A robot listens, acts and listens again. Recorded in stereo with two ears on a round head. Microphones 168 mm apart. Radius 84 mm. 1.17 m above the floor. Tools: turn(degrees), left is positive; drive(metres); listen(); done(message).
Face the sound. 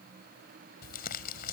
turn(degrees=55)
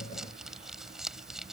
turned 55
done("Facing the crumpling.")